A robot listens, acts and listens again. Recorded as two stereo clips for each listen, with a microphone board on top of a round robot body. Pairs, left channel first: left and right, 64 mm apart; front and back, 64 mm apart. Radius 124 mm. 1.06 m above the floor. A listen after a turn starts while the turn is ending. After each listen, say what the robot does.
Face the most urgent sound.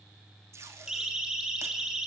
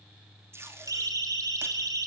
Turn 170° right.
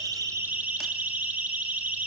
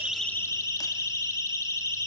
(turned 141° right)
Turn 30° right.
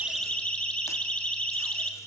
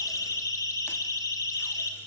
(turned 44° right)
Turn 20° left.
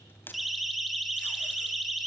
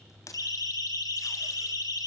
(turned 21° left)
Found it: a siren, straight ahead, 2 to 4 m away.